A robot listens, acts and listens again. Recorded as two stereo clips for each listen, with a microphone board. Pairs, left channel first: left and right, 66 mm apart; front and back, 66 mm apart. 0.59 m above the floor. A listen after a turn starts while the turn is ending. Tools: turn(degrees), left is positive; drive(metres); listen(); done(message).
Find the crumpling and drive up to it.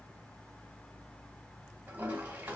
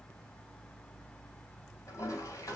listen()
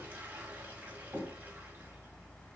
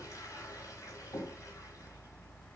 listen()
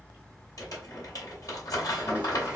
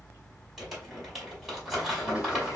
turn(degrees=95)
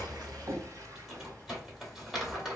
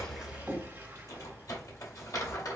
drive(metres=1.0)
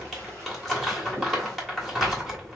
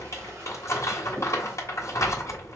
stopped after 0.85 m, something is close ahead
done("Arrived at the crumpling, straight ahead.")